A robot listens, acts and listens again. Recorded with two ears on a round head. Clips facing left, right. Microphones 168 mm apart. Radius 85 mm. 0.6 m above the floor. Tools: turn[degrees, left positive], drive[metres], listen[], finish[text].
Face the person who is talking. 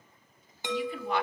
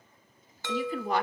Thought: The woman speaking: about 35° right or 145° right.
Action: turn[-35]
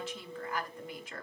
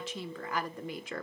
Thought: So it is at 100° right.
Action: turn[-100]
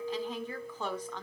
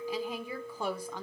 Thought: The woman speaking is now 10° right.
Action: turn[-10]
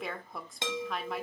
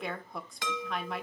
Action: finish[Found it: a woman speaking, straight ahead, 1 to 2 m away.]